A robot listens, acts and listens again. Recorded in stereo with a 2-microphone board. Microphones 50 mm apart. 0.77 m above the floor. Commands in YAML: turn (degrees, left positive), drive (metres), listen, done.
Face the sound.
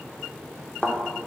turn: 20
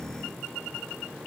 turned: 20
listen: true
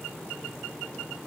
done: "I heard a thud, but can't make it out now. It was about straight ahead or 140° left."